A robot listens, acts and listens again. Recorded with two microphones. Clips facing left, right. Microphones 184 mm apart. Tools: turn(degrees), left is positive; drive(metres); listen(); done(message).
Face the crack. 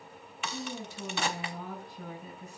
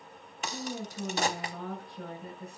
turn(degrees=-45)
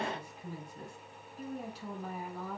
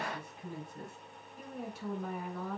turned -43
listen()
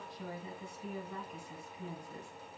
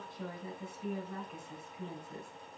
done("I heard a crack, but can't make it out now. It was about straight ahead or 95° right.")